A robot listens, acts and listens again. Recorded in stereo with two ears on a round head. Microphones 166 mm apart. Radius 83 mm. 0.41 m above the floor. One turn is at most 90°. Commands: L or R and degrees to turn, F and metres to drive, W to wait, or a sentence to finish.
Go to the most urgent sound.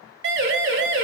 R65
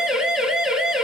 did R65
F1.0
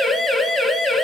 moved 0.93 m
F1.0
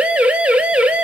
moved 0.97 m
R10
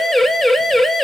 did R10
F1.0
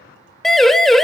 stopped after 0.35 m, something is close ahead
I am next to the siren.